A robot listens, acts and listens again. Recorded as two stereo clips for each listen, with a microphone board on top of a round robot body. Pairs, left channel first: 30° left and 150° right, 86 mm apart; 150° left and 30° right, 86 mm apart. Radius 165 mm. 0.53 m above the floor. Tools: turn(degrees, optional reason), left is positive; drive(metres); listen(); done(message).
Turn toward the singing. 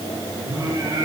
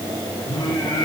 turn(degrees=165, reason="The singing: 165° left.")
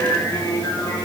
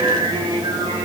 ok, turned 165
turn(degrees=-30, reason="The singing is now 30° right.")
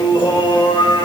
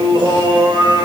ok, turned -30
done("Found it: singing, straight ahead, 2 to 4 m away.")